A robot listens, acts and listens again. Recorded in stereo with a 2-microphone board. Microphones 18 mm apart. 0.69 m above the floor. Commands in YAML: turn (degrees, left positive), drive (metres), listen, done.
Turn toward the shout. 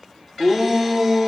turn: -15
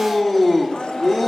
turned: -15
done: "Found it: a shout, straight ahead."